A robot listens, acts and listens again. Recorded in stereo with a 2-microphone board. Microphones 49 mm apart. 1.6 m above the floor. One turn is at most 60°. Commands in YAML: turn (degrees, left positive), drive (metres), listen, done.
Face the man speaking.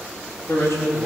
turn: 60
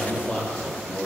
turn: 25
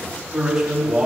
turn: -10
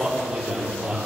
done: "Found it: a man speaking, straight ahead, 2 to 4 m away."